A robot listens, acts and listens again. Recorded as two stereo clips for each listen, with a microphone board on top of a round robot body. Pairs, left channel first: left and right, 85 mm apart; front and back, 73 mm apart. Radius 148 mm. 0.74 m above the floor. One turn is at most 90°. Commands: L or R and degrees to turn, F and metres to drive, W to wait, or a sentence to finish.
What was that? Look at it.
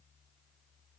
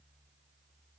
W
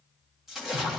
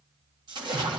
R90
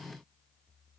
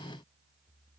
R85
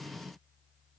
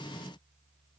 I heard a splash from this way, but can't make it out now.